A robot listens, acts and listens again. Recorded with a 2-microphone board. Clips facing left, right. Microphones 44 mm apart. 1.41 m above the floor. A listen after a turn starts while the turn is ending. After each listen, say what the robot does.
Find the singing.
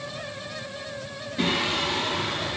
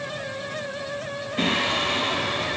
Turn 65° right.
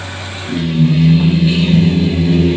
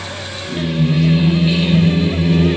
Turn 15° right.
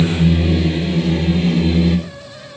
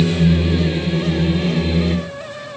Turn 10° right.
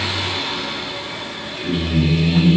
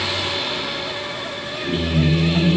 Found it: singing, straight ahead.